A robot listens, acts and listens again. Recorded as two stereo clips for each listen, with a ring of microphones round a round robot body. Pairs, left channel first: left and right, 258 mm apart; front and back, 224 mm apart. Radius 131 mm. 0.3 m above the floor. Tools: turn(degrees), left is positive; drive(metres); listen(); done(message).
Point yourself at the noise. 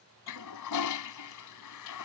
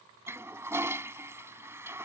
turn(degrees=100)
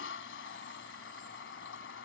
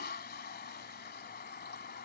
turn(degrees=45)
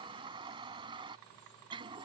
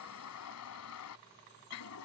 turn(degrees=-20)
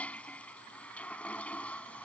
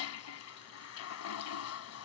done("Facing the toilet flushing.")